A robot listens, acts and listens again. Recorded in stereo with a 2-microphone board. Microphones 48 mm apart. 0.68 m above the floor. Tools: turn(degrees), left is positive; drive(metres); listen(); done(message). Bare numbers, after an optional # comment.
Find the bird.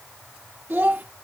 listen()
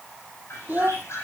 # The bird: about 70° left or 110° left.
turn(70)
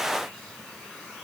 listen()
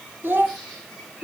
done("Found it: a bird, straight ahead, over 4 m away.")